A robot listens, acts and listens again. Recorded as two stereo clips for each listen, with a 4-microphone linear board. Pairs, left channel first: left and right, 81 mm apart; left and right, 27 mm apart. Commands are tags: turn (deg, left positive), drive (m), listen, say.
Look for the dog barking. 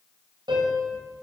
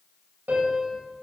<listen/>
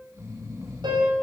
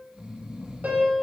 <listen/>
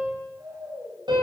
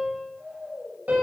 <say>I can't make out a dog barking, only snoring and a piano.</say>